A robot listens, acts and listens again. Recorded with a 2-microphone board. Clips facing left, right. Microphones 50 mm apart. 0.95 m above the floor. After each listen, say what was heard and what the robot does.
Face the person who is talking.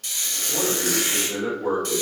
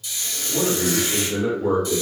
The man speaking: about 25° left or 155° left. Turn 25° left.
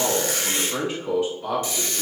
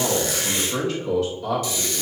The man speaking: about 25° left or 155° left. Turn 25° left.
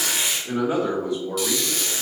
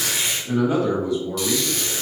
The man speaking: about 35° left or 145° left. Turn 35° left.
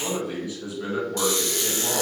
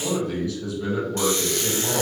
So it is at 15° left. Turn 15° left.
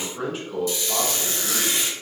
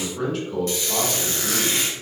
Facing the man speaking.